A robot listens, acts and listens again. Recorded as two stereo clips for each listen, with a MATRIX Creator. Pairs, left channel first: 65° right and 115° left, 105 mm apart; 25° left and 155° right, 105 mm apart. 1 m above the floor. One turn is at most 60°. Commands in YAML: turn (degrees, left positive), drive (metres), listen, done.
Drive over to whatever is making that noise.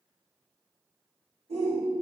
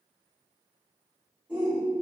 turn: 60
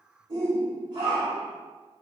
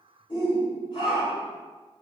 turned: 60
turn: 60
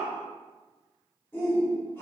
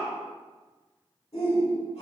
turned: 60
drive: 1.0
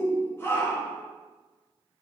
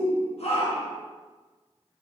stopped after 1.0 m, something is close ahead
done: "Arrived at the shout, straight ahead."